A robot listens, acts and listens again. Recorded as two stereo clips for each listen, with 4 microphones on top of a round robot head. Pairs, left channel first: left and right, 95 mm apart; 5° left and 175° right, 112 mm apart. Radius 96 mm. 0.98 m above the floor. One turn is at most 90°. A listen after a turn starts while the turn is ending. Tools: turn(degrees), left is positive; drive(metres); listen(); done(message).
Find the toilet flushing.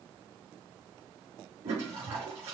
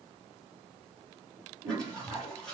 turn(degrees=-80)
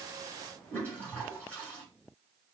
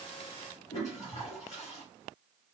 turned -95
turn(degrees=15)
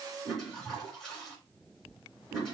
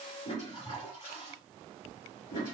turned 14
done("Facing the toilet flushing.")